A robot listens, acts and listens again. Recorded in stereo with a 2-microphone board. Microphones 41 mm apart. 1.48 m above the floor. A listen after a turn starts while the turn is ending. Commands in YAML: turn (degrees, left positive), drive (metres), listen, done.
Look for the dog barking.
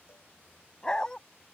turn: 15
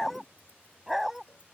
turn: -30
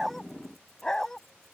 turn: 10
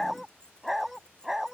turn: -10
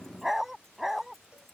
turn: -10
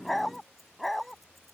done: "Facing the dog barking."